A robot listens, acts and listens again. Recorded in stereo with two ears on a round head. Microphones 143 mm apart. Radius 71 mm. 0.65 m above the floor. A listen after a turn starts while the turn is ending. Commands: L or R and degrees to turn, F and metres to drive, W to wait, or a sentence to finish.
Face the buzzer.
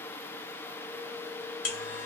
L65
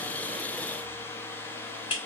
L40
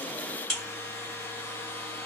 Facing the buzzer, 1 to 2 m away.